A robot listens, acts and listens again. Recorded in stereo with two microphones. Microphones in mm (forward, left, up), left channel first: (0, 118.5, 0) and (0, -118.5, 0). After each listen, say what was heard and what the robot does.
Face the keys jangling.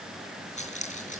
The keys jangling: about 30° left or 150° left. Turn 30° left.
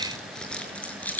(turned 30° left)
Found it: keys jangling, straight ahead.